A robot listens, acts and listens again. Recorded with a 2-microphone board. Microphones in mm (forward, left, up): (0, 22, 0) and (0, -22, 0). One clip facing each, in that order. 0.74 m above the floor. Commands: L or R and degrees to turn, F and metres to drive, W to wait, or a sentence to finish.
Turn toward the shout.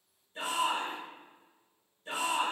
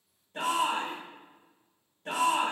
R65
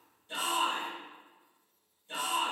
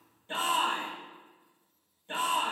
R40
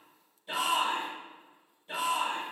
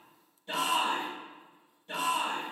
Facing the shout, 1 to 2 m away.